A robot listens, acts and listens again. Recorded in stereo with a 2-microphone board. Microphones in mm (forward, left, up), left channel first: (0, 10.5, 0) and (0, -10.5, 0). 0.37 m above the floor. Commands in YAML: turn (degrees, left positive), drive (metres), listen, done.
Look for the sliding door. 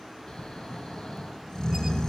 listen: true
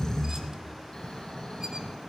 listen: true
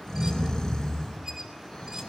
done: "I can't make out a sliding door to turn to."